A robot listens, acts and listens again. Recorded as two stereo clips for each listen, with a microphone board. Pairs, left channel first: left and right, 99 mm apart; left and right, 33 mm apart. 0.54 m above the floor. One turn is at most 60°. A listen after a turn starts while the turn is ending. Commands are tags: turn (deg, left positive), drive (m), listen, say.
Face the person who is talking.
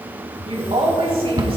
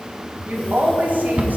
<turn deg="-60"/>
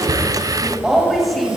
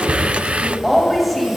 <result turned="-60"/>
<say>Found it: a woman speaking, straight ahead, 2 to 4 m away.</say>